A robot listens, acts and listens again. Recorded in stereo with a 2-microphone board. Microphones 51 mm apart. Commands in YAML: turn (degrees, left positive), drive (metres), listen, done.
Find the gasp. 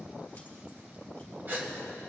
turn: -40
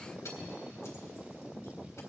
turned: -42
listen: true
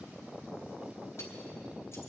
done: "I heard a gasp, but can't make it out now. It was about straight ahead or 95° right."